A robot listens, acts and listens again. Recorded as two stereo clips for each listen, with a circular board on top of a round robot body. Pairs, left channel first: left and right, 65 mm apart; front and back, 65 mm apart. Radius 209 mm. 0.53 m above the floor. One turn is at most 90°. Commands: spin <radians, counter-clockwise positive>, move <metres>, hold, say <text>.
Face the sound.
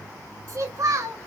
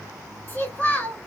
spin -1.13
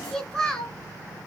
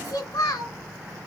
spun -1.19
say Found it: a child speaking, straight ahead, 2 to 4 m away.